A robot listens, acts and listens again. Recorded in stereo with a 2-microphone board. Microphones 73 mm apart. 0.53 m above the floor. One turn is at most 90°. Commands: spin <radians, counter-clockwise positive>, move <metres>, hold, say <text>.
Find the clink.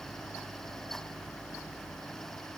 hold
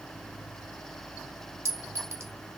spin -0.61
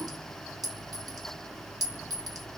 spin -1.57
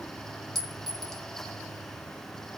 say Found it: a clink, straight ahead, 1 to 2 m away.